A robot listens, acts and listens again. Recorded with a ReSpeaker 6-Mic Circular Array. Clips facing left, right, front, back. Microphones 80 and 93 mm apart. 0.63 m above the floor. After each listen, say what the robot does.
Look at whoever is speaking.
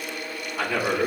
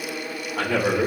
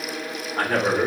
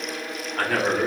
Turn 65° right.
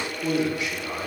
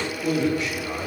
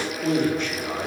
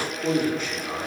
Turn 20° left.
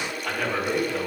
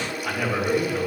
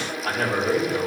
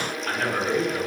Found it: a man speaking, straight ahead, 2 to 4 m away.